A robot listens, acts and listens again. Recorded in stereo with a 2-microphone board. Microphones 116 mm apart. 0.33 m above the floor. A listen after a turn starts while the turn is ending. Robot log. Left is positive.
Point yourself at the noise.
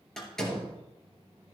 cmd yaw +30
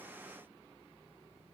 cmd idle
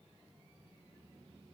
end: I heard a door slam, but can't make it out now. It was about 25° right or 145° left.